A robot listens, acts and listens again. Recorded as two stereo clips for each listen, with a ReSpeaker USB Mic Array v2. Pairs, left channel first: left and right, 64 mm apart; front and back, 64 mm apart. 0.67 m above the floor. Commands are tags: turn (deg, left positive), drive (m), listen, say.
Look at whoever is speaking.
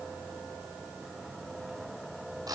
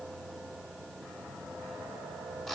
<listen/>
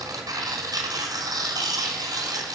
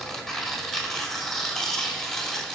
<listen/>
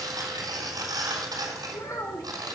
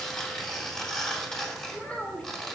<turn deg="70"/>
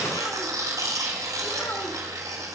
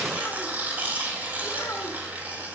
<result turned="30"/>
<turn deg="40"/>
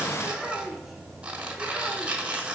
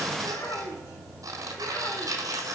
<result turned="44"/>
<say>Facing the child speaking, 1 to 2 m away.</say>